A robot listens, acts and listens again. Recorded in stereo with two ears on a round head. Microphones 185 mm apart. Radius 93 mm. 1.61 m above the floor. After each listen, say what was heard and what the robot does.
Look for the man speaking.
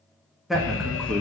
Turn 30° left.
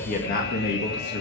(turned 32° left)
So it is at 120° left. Turn 120° left.
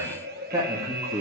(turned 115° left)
The man speaking is now 25° right. Turn 25° right.
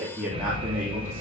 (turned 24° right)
The man speaking is now 10° right. Turn 10° right.
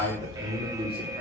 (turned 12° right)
Found it: a man speaking, straight ahead.